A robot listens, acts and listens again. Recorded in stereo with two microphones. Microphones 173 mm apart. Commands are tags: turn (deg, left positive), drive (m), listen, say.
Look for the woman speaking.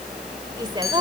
<turn deg="-30"/>
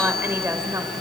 <turn deg="-20"/>
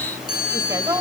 <turn deg="-20"/>
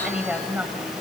<turn deg="-10"/>
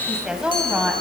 <say>Facing the woman speaking, 2 to 4 m away.</say>